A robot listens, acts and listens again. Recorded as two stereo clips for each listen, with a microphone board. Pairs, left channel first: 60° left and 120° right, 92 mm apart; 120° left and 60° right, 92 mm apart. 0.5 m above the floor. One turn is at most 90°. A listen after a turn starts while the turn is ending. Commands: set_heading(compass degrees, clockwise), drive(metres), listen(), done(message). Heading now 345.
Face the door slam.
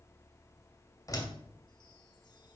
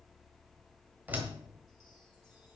set_heading(335)
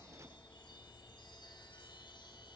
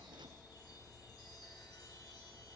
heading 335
done("Facing where the door slam came from. I can't hear it now.")